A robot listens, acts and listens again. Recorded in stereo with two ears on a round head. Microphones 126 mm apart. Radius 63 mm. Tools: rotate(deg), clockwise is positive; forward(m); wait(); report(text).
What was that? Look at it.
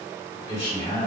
rotate(-35)
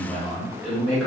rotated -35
report("Found it: a man speaking, straight ahead.")